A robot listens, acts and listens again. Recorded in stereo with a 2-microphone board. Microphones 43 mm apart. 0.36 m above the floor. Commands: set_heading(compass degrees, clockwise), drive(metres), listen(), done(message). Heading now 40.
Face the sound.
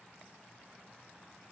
listen()
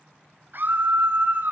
set_heading(95)
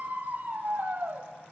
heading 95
set_heading(150)
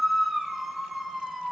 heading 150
done("Facing the scream.")